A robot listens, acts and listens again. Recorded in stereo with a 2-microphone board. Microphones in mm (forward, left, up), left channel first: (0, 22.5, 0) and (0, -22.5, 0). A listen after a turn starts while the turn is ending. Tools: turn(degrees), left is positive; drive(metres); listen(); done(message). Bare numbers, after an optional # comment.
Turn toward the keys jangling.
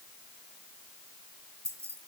# The keys jangling: about 70° right or 110° right.
turn(-70)
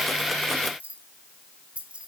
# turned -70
# So it is at 25° right.
turn(-25)
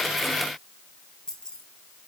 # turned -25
# The keys jangling is now 15° left.
turn(15)
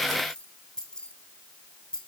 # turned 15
# The keys jangling is now 20° left.
turn(20)
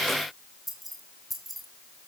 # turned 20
done("Facing the keys jangling, 2 to 4 m away.")